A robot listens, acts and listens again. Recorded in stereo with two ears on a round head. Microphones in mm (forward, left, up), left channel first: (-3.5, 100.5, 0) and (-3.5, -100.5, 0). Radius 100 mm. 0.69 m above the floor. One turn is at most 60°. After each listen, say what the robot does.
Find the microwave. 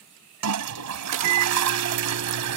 Turn 55° right.
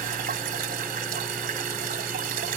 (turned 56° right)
Keep listening.
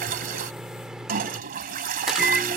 Facing the microwave.